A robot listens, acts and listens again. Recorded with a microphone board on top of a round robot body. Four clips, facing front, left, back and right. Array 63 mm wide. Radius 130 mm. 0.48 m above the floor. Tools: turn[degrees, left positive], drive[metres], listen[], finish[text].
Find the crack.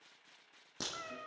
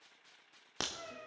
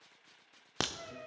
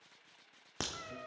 Thought: The crack: 175° left.
Action: turn[175]
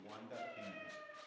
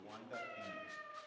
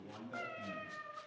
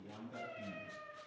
Action: finish[I heard a crack from this way, but can't make it out now.]